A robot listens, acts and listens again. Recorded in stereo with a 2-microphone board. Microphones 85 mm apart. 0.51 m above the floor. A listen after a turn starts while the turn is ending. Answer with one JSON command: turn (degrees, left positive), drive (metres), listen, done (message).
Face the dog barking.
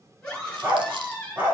{"turn": -20}
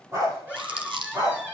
{"turn": -140}
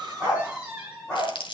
{"turn": 10}
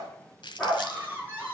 {"done": "Facing the dog barking, over 4 m away."}